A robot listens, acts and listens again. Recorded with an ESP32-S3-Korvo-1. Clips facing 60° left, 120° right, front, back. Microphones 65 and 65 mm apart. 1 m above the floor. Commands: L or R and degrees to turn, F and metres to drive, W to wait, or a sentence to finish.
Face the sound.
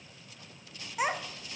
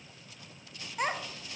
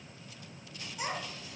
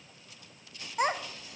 L145
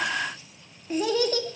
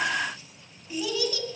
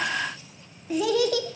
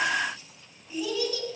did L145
L20
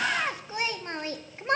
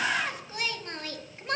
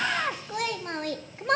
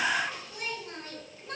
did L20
Found it: a child speaking, straight ahead, under 1 m away.